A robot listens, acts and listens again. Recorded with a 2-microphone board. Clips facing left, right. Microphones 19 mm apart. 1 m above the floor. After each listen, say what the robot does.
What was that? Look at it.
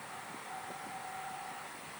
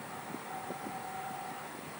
Keep listening.
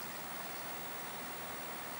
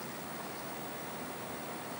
Keep listening.
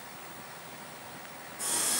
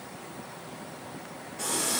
Turn 90° right.
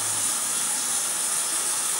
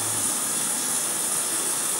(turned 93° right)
Turn 15° left.
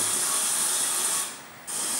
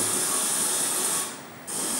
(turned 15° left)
Found it: a running tap, straight ahead.